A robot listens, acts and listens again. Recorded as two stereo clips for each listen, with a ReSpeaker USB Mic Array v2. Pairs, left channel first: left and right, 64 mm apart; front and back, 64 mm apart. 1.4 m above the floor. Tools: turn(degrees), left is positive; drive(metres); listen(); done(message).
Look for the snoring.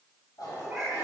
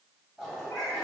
listen()
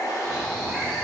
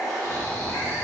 turn(degrees=165)
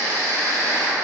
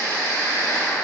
turn(degrees=50)
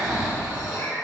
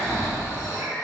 turn(degrees=-20)
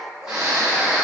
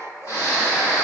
turn(degrees=-10)
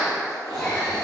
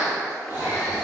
done("Facing the snoring, 1 to 2 m away.")